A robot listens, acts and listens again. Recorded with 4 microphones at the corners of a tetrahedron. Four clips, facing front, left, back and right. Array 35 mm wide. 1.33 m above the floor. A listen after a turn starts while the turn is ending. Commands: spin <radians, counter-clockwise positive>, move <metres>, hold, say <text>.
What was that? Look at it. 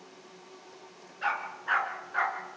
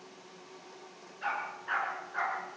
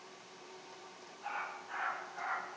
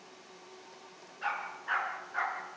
say Facing the dog barking.